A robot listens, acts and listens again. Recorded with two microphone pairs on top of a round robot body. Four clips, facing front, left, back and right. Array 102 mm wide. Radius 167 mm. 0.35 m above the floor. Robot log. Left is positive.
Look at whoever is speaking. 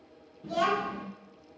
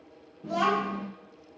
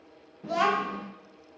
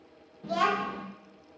note: The child speaking: 155° right.
cmd yaw -155
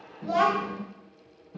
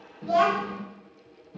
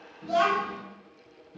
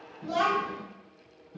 note: The child speaking is now 25° left.
cmd yaw +25
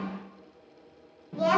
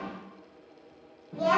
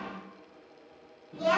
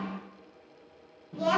note: The child speaking is now 15° left.
cmd yaw +15
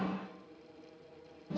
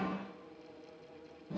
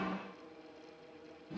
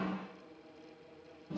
end: Facing the child speaking.